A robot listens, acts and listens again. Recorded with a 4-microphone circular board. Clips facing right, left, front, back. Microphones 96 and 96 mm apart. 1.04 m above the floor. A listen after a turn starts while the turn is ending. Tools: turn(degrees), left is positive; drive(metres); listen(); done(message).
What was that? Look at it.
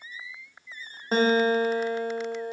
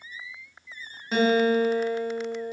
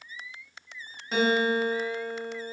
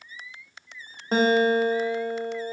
turn(degrees=-135)
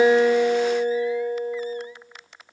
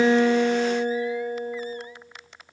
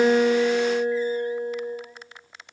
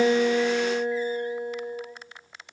turn(degrees=45)
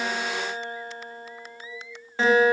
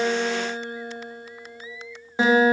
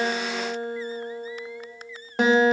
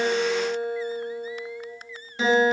turn(degrees=20)
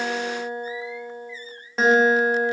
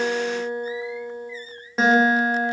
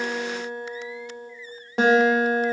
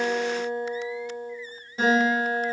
done("Facing the guitar, 1 to 2 m away.")